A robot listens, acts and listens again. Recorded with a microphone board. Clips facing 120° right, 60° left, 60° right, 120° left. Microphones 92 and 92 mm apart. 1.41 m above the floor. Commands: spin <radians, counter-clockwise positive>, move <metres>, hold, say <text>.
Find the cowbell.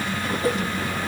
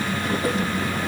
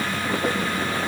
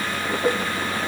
hold
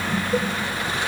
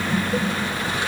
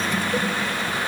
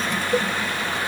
hold
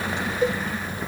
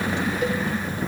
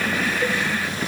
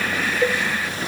spin 3.14
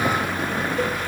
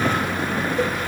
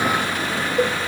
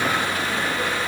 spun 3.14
spin -0.52
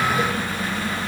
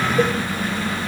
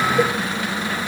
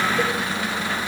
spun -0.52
hold
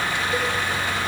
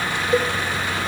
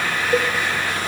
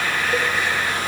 say Facing the cowbell.